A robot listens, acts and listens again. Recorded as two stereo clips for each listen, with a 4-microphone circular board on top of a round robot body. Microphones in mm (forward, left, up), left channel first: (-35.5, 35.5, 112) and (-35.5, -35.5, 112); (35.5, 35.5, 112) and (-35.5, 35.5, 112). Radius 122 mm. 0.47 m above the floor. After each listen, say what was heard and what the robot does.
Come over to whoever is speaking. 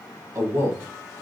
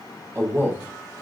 The man speaking: 125° right. Turn 125° right.
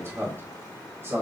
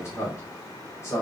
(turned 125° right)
The man speaking is now 40° right. Turn 40° right.
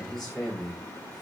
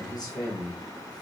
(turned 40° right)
The man speaking is now 10° left. Turn 10° left.
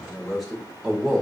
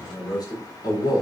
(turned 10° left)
Drive 1.0 m forward.
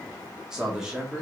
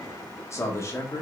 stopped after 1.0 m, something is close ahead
The man speaking is now 10° right. Turn 10° right.
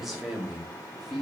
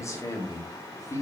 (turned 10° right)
I am next to the man speaking.